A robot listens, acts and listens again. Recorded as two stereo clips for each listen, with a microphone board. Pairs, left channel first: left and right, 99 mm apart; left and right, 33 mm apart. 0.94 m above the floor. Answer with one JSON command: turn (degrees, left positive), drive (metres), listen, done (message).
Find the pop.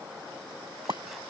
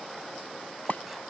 {"turn": -35}
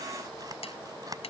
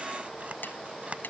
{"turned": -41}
{"listen": true}
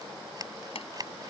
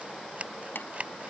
{"done": "I heard a pop, but can't make it out now. It was about 5° left or 100° right."}